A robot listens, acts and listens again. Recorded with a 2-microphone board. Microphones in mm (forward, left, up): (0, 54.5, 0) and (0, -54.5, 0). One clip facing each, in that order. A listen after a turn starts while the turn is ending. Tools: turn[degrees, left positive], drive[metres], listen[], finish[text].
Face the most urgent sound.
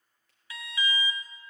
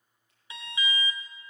Thought: The alarm: about 25° right or 155° right.
Action: turn[-25]
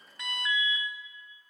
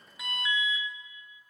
Action: finish[Facing the alarm.]